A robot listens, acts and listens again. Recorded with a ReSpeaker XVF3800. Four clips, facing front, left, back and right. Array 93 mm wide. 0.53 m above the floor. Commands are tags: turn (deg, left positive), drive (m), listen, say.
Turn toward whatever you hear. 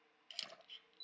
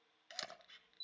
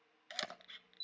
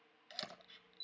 <turn deg="175"/>
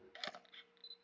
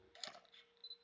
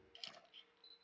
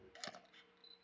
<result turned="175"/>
<turn deg="-20"/>
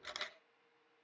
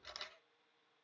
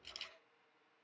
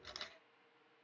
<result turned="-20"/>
<say>Facing the camera shutter, 1 to 2 m away.</say>